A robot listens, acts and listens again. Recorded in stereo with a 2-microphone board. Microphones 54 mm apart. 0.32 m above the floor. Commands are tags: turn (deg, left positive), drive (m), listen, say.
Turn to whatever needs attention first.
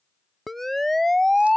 <turn deg="30"/>
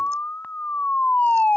<turn deg="145"/>
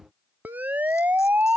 <turn deg="-40"/>
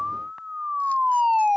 <say>Facing the siren.</say>